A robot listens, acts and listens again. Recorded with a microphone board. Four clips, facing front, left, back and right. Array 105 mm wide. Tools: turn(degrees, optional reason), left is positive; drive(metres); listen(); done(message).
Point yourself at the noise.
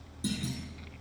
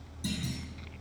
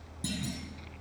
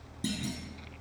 turn(degrees=-105, reason="The clunk: 105° right.")
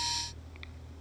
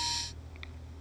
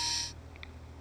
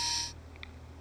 done("I heard a clunk from this way, but can't make it out now.")